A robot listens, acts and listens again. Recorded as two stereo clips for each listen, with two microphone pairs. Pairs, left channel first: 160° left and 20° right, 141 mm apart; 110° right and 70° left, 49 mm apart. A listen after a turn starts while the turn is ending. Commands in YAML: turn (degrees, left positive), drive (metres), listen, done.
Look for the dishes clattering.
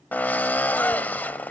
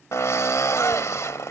listen: true
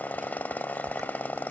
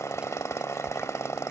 listen: true
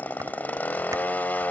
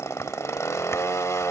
done: "I can't make out dishes clattering, only a drill."